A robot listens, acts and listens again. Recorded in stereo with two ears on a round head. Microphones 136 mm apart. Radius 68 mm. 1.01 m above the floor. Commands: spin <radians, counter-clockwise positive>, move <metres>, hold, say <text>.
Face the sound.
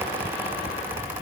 hold
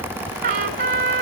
spin -1.13
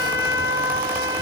spin -0.35
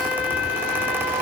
say Found it: a trumpet, straight ahead.